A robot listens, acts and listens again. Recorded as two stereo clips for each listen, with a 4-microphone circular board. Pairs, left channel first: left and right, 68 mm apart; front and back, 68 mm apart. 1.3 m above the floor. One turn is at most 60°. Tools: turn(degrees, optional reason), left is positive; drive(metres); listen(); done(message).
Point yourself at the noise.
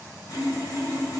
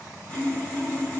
turn(degrees=60, reason="The sawing: 70° left.")
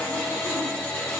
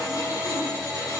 turn(degrees=20, reason="The sawing is now 20° left.")
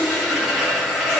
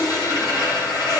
done("Found it: sawing, straight ahead, 1 to 2 m away.")